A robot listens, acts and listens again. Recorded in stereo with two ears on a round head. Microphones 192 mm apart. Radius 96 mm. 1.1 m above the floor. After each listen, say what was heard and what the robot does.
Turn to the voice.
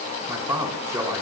The man speaking: about 15° right or 165° right. Turn 15° right.
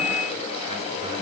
Keep listening.
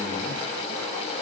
Keep listening.
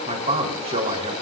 So it is at 150° right. Turn 150° right.
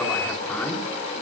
The man speaking is now 10° left. Turn 10° left.
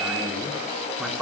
Facing the man speaking.